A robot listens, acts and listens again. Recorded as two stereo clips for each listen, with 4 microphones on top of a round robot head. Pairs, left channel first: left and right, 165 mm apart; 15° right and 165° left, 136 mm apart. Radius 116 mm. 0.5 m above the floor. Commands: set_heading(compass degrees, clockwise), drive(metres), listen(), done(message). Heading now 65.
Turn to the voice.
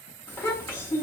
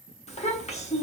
set_heading(50)
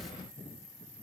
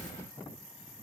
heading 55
listen()
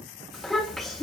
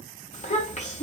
done("Found it: a child speaking, straight ahead.")